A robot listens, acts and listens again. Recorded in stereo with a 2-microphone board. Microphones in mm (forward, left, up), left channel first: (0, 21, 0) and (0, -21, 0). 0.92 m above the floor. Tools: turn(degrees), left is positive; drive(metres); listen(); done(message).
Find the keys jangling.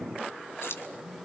turn(degrees=90)
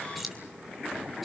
done("Facing the keys jangling.")